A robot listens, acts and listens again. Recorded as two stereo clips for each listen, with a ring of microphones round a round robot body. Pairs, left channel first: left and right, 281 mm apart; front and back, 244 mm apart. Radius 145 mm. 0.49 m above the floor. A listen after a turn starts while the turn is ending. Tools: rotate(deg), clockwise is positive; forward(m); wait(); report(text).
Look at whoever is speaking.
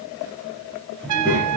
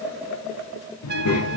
report("Found it: a child speaking, straight ahead.")